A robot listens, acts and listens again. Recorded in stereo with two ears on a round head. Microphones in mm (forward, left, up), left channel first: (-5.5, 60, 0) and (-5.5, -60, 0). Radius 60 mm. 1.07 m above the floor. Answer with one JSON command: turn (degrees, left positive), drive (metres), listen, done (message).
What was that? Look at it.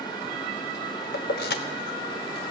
{"turn": 90}
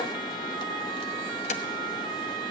{"turn": 50}
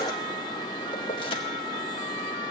{"listen": true}
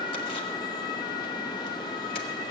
{"listen": true}
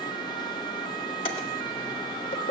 {"turn": 40}
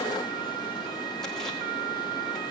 {"listen": true}
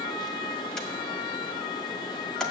{"listen": true}
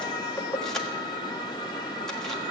{"done": "Found it: keys jangling, straight ahead, 1 to 2 m away."}